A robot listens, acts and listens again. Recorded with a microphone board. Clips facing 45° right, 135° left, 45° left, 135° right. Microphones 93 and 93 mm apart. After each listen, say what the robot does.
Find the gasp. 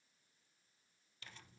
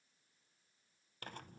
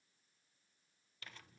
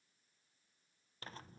Keep listening.
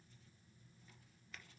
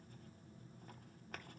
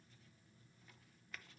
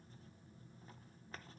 Keep listening.
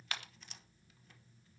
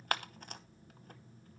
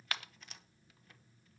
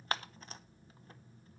I can't make out a gasp to turn to.